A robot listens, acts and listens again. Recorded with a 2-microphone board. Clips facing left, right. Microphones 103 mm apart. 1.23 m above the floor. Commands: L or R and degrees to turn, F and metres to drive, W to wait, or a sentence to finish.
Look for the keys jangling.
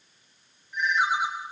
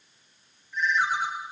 W
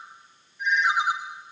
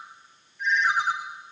W
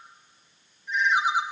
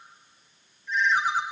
I can't make out keys jangling to turn to.